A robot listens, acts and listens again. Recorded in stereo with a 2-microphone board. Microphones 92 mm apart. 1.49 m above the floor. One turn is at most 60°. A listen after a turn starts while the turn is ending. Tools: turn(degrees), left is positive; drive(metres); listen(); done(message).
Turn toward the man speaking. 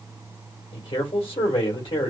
turn(degrees=60)
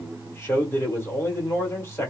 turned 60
turn(degrees=30)
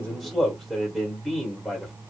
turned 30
done("Facing the man speaking.")